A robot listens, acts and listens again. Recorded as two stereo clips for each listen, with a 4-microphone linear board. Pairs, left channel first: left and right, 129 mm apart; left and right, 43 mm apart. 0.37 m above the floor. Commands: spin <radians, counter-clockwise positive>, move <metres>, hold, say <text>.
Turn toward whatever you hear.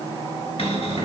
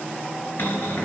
spin 0.87
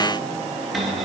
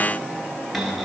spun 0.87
say Found it: a cupboard door, straight ahead.